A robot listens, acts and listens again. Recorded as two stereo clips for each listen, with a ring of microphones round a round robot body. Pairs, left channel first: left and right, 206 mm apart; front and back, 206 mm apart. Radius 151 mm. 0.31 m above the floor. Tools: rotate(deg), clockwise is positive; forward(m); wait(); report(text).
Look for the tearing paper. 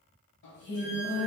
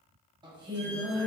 wait()
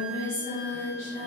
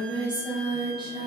wait()
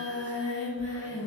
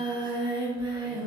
report("I can't make out tearing paper to turn to.")